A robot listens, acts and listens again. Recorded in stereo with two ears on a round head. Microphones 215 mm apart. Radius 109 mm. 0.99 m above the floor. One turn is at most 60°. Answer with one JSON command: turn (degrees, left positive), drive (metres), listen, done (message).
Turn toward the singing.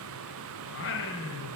{"turn": 55}
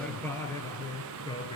{"turn": 20}
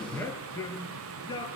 {"turn": 15}
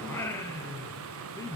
{"turn": 15}
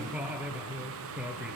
{"done": "Facing the singing, 2 to 4 m away."}